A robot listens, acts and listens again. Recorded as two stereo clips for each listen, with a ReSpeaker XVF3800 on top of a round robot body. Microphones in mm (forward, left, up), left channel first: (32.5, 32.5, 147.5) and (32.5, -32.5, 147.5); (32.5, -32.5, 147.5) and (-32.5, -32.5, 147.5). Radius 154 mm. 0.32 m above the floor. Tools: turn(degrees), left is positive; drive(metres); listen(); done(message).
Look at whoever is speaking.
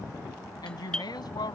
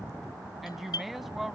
turn(degrees=90)
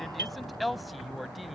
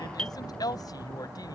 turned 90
done("Facing the woman speaking.")